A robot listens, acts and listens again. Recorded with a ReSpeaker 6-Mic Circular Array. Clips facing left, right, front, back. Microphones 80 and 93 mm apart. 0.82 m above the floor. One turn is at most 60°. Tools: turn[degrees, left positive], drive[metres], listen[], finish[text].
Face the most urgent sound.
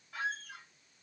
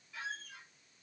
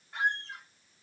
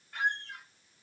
Action: listen[]
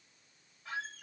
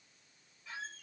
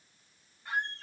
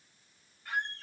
Action: listen[]
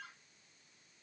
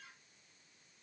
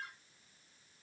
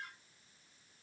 Action: finish[I can't make out anything urgent to turn to.]